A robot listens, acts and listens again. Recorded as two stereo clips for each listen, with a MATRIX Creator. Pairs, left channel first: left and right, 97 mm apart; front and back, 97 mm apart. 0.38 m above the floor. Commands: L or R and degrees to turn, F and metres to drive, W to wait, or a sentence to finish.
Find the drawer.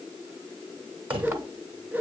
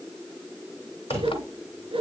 R115
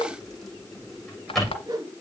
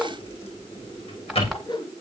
Found it: a drawer, straight ahead.